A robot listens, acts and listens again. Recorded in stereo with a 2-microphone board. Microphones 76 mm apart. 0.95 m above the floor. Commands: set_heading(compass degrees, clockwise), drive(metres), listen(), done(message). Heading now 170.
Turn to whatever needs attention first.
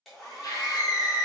set_heading(115)
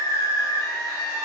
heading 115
set_heading(55)
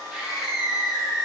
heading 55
done("Facing the scream.")